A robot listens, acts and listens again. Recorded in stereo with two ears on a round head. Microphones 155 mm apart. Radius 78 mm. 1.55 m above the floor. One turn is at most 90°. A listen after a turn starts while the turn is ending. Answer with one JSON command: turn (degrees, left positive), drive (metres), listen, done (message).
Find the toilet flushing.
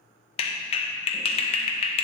{"listen": true}
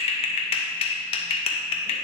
{"listen": true}
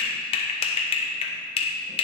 {"done": "I can't make out a toilet flushing to turn to."}